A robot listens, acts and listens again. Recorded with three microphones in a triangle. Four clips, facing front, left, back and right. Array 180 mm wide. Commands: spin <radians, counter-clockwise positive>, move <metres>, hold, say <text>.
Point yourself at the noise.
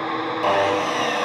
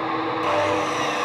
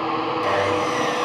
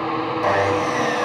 spin -0.70
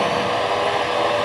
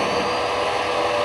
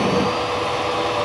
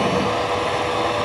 say Found it: sawing, straight ahead.